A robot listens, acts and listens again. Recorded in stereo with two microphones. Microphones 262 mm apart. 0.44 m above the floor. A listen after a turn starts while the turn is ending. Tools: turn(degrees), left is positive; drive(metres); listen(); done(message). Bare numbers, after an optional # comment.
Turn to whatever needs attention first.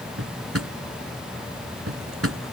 listen()
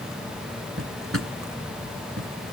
listen()
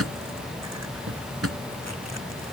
done("I can't make out anything urgent to turn to.")